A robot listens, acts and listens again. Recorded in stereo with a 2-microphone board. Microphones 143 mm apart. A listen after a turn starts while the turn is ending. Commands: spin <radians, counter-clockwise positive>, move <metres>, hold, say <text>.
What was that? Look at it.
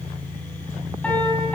spin 0.52
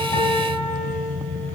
spin 2.44
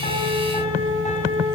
spin 0.96
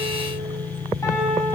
spin 0.35
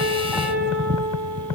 say Facing the piano, over 4 m away.